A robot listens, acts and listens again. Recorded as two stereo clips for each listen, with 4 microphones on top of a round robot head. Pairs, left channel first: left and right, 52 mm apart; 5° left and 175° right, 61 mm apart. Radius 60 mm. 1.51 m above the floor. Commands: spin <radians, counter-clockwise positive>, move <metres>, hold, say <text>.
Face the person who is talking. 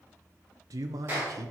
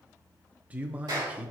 spin -1.83
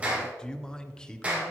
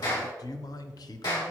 spin 0.26
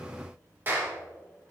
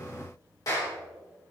hold
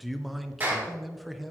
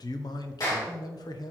say Found it: a man speaking, straight ahead, under 1 m away.